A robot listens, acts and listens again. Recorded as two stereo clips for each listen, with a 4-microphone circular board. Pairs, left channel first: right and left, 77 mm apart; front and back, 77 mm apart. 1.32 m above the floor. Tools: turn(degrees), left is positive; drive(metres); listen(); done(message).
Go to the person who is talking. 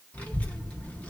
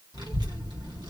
turn(degrees=-160)
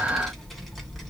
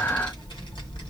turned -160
drive(metres=1.0)
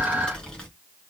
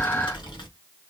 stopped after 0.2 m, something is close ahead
turn(degrees=-15)
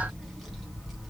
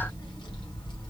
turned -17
done("Something is in my way. I am facing the child speaking but have not reached it.")